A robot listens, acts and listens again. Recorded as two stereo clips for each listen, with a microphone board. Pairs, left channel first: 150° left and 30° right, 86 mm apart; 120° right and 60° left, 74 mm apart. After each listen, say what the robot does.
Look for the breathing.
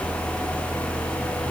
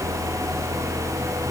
Keep listening.
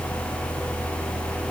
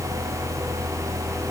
Keep listening.
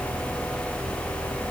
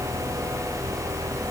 I can't make out breathing to turn to.